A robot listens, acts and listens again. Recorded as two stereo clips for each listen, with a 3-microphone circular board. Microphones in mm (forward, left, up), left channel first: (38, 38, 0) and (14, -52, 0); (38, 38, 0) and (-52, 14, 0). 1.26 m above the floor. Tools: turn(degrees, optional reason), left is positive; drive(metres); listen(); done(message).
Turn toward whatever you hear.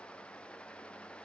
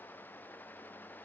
listen()
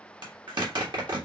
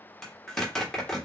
turn(degrees=-70, reason="The zipper: 70° right.")
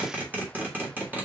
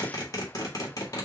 turn(degrees=-35, reason="The zipper is now 35° right.")
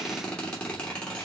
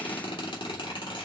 done("Facing the zipper, 2 to 4 m away.")